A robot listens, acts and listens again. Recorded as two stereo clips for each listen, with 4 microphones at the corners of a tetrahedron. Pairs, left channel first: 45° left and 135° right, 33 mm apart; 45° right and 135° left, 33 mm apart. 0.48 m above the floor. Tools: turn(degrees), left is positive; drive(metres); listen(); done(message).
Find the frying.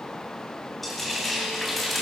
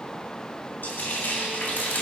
turn(degrees=-45)
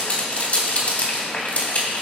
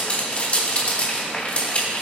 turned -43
done("Found it: frying, straight ahead, 2 to 4 m away.")